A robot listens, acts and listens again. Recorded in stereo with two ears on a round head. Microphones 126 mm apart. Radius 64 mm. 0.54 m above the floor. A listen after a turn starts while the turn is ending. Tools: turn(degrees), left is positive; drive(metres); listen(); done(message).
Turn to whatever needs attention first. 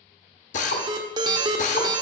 turn(degrees=-35)
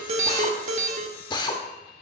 turn(degrees=-110)
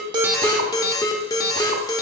turn(degrees=25)
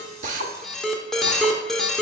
done("Found it: an alarm, straight ahead.")